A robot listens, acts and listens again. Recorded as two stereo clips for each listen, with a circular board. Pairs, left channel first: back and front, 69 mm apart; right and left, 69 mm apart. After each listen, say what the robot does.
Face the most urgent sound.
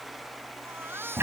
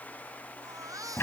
Turn 55° left.
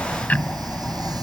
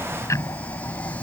Keep listening.
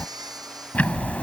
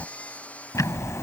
Turn 20° right.
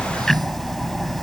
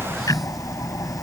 Keep listening.
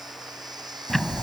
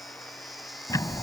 Keep listening.
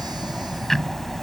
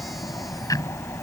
I heard a baby crying from this way, but can't make it out now.